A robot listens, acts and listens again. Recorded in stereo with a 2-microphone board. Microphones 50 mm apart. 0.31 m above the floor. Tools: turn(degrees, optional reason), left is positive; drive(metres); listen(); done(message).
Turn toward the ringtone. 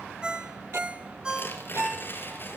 turn(degrees=-20, reason="The ringtone: about 20° right or 160° right.")
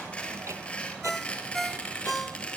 done("Found it: a ringtone, straight ahead.")